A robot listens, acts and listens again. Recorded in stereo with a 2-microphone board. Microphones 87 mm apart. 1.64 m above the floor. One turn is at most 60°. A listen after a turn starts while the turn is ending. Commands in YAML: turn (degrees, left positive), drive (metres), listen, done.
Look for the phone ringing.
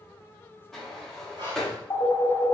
turn: 35
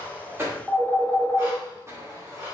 done: "Found it: a phone ringing, straight ahead, 1 to 2 m away."